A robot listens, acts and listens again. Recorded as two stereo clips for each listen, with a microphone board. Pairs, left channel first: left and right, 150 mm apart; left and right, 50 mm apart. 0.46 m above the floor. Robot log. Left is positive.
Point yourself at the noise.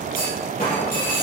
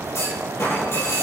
note: The clunk: about 60° left or 120° left.
cmd yaw +60
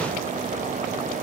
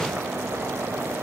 cmd idle
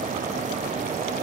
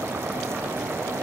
end: I heard a clunk, but can't make it out now. It was about straight ahead or 60° left.